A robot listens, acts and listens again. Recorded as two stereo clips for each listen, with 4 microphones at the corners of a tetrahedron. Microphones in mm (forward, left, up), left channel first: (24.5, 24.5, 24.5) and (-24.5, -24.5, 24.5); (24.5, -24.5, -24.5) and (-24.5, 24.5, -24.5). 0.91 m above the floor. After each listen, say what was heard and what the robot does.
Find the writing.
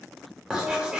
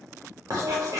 The writing: 150° left. Turn 150° left.
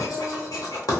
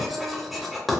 The writing is now 45° left. Turn 45° left.
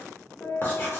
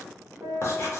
Found it: writing, straight ahead.